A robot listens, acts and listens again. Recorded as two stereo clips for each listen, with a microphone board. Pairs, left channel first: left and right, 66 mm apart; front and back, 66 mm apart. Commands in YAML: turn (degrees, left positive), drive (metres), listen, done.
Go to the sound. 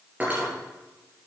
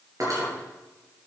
turn: -155
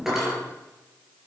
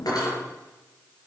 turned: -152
drive: 1.0
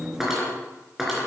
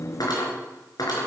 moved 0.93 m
drive: 1.0
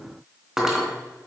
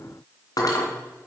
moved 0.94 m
drive: 1.0
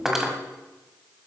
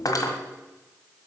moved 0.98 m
drive: 1.0
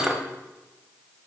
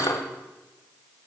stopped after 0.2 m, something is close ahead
turn: -10
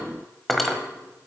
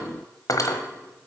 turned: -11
done: "Arrived at the cutlery clinking, straight ahead."